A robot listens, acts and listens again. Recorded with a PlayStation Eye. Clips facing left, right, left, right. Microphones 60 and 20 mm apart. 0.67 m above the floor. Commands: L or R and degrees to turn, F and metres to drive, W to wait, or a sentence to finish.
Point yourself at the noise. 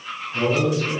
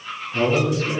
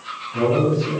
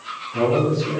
R40
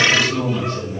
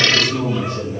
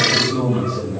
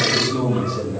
R10
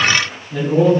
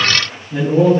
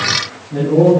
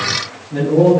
R10
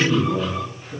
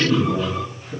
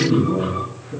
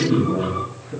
R10
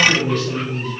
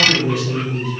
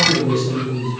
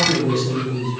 R10
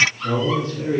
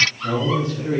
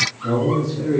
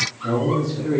Found it: a man speaking, straight ahead.